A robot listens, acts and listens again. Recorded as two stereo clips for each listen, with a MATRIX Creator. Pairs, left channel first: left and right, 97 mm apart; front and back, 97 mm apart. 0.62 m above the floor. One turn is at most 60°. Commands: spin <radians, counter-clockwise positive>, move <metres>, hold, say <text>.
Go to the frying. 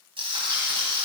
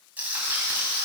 spin -1.05
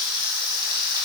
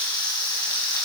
spin -0.79
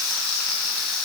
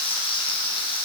move 1.0
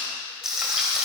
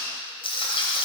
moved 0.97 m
move 1.0
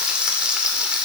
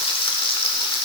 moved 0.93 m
spin -0.17
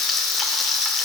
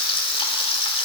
move 1.0
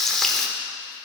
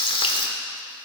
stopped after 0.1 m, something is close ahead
say I am next to the frying.